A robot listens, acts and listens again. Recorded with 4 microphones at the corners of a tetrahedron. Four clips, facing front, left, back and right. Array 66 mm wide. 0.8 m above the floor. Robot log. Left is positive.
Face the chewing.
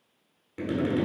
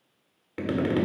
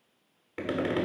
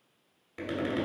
cmd idle
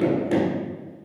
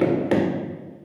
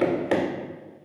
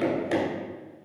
cmd idle
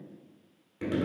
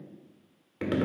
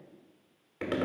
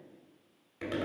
end: I can't make out chewing to turn to.